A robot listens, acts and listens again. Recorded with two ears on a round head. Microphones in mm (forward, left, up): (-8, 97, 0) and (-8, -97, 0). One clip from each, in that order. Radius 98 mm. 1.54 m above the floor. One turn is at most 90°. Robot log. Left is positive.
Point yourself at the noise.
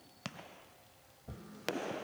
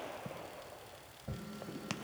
note: The tapping: about 70° right or 110° right.
cmd yaw -70
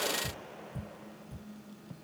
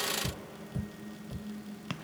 note: So it is at 25° right.
cmd yaw -25
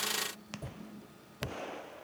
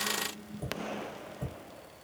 note: The tapping is now 15° right.
cmd yaw -15
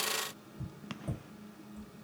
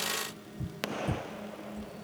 note: The tapping is now 10° right.
cmd yaw -10
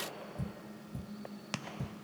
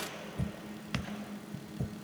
end: Facing the tapping, 1 to 2 m away.